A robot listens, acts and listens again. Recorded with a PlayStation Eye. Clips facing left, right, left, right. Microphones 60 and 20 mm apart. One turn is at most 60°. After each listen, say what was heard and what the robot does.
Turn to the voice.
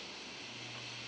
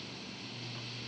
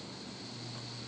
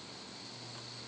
Keep listening.
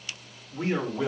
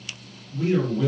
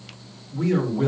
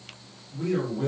The man speaking: about 20° left or 160° left. Turn 20° left.
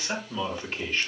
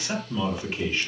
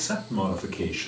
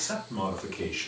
So it is at 10° right. Turn 10° right.
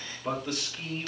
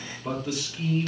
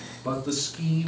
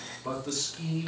Found it: a man speaking, straight ahead, 2 to 4 m away.